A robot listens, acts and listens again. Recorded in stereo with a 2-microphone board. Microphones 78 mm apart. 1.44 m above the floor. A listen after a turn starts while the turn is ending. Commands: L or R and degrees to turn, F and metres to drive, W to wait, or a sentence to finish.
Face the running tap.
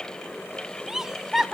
W
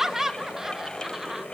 W
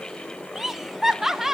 I can't make out a running tap, only laughter.